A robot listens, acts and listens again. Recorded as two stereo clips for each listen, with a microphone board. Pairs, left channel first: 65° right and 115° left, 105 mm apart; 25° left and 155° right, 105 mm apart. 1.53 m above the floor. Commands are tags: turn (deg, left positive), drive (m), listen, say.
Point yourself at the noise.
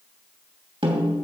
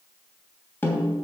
<turn deg="90"/>
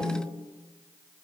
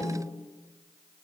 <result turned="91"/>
<say>Found it: a snare drum, straight ahead, 2 to 4 m away.</say>